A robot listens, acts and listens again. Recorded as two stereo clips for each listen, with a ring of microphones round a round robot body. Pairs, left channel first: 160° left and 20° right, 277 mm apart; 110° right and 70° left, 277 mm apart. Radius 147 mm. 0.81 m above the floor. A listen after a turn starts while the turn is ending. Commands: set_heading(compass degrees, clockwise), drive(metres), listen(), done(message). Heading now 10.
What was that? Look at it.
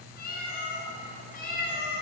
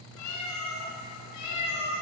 set_heading(150)
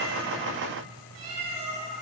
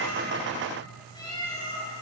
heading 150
set_heading(185)
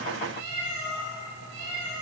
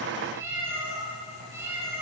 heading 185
set_heading(200)
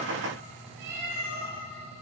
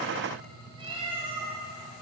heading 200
done("Found it: a cat meowing, straight ahead.")